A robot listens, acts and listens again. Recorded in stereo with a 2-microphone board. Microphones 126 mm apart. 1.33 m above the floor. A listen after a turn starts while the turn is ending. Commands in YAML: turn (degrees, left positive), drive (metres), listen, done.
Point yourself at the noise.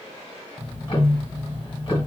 turn: 40
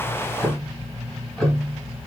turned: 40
done: "Facing the ticking, 1 to 2 m away."